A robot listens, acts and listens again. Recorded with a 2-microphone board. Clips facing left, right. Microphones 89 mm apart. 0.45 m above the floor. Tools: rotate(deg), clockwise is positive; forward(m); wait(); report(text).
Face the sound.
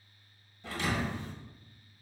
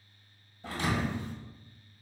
rotate(40)
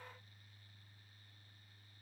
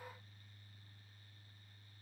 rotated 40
wait()
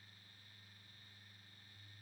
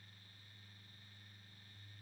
report("I heard a thud, but can't make it out now. It was about straight ahead or 100° right.")